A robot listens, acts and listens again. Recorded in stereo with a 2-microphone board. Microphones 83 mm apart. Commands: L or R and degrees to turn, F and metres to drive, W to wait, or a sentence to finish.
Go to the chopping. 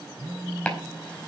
L30
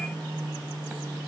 W
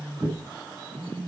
R15
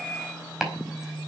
F1.0
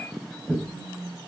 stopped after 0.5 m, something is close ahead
Something is in my way. I am facing the chopping but have not reached it.